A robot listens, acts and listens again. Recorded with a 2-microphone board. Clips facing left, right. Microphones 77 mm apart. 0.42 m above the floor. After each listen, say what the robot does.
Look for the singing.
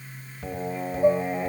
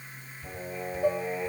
Turn 55° left.
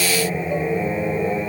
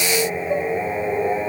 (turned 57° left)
Turn 30° right.
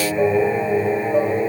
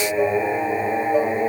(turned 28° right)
Turn 20° right.
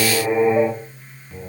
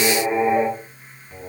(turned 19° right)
Turn 10° right.
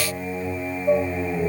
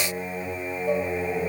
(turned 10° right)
Facing the singing.